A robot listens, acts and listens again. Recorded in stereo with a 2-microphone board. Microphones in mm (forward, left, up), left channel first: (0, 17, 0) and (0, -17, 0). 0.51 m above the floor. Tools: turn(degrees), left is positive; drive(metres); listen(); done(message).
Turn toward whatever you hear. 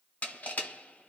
turn(degrees=50)
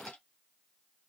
listen()
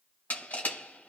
turn(degrees=70)
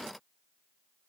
listen()
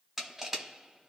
turn(degrees=-10)
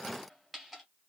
done("Found it: crushing, straight ahead, 1 to 2 m away.")